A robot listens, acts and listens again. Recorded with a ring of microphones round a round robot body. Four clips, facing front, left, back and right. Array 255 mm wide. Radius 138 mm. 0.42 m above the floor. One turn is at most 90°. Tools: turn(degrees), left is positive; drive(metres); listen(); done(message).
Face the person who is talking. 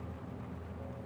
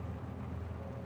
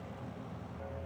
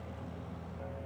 listen()
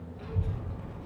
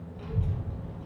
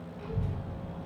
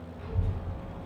turn(degrees=90)
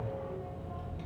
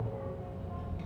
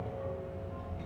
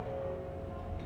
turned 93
turn(degrees=40)
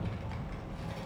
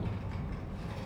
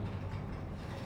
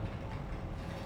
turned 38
done("Found it: a child speaking, straight ahead, 2 to 4 m away.")